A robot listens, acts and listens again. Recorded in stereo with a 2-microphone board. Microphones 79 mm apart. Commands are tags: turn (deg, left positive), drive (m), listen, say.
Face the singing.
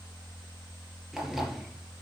<listen/>
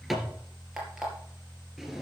<listen/>
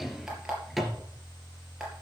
<say>I can't make out singing to turn to.</say>